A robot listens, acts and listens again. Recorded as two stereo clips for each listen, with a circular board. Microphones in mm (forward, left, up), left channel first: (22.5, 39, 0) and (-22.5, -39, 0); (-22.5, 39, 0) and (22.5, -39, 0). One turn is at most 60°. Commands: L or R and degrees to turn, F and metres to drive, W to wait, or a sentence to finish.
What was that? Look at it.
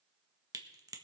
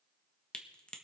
R60
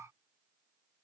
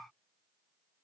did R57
R60
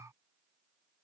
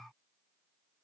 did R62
R45
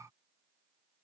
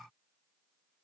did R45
Facing where the crack came from. I can't hear it now.